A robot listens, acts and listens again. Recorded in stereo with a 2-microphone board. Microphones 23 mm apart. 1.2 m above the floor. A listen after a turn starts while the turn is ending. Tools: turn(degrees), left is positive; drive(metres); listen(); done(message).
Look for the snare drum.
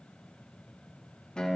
listen()
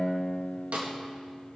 turn(degrees=-65)
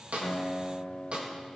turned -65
turn(degrees=-45)
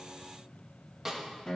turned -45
turn(degrees=-10)
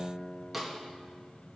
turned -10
done("Facing the snare drum, 1 to 2 m away.")